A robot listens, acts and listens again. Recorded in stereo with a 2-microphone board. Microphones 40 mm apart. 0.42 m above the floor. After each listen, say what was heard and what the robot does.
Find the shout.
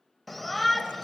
Turn 30° left.
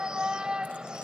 So it is at 25° right. Turn 25° right.
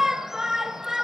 The shout is now 15° right. Turn 15° right.
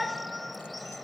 Found it: a shout, straight ahead.